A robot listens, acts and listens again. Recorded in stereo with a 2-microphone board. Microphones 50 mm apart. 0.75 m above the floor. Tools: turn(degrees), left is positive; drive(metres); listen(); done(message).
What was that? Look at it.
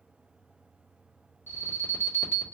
turn(degrees=50)
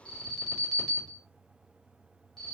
turn(degrees=10)
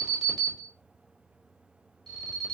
done("Facing the alarm.")